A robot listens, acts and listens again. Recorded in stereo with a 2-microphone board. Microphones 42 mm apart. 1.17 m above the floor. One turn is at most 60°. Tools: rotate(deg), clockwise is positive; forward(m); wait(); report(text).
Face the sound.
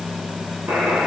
rotate(60)
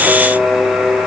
rotate(15)
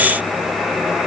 report("Found it: a buzzer, straight ahead.")